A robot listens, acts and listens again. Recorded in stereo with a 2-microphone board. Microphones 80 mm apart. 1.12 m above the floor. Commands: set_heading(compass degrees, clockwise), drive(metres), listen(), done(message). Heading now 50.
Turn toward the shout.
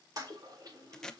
listen()
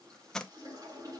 listen()
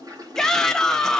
set_heading(20)
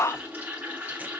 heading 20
set_heading(235)
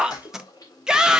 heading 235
set_heading(245)
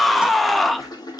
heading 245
done("Facing the shout, 1 to 2 m away.")